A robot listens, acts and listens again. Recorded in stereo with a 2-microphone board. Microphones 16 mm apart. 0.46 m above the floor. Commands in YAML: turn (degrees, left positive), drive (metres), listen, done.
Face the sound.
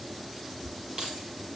turn: -45
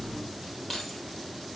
done: "Facing the keys jangling."